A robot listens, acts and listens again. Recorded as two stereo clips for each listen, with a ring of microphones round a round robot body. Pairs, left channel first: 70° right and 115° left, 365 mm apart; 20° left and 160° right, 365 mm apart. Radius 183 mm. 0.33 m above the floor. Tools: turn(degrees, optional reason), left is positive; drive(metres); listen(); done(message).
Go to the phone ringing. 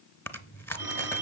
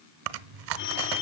turn(degrees=30, reason="The phone ringing: 30° left.")
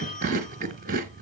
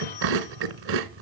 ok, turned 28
drive(metres=1.0)
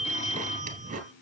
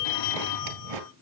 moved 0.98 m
drive(metres=1.0)
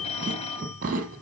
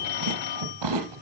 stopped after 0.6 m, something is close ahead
done("Arrived at the phone ringing, straight ahead.")